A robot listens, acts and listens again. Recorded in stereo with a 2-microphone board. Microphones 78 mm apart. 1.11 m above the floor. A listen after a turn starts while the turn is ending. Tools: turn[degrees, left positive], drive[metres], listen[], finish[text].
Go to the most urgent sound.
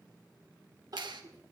Thought: The crying: about 55° right or 125° right.
Action: turn[-55]
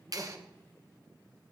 Action: listen[]
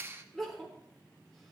Action: drive[1.0]
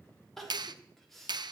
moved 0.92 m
Action: drive[1.0]
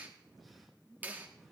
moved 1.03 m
Action: listen[]
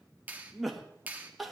Action: drive[1.0]
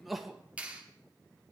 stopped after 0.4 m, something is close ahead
Action: finish[I am next to the crying.]